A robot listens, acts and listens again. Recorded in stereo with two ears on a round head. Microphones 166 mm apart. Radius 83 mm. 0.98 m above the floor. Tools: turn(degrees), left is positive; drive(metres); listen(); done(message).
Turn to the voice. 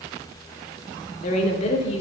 turn(degrees=35)
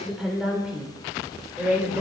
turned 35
turn(degrees=-10)
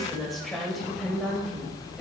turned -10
done("Found it: a woman speaking, straight ahead, over 4 m away.")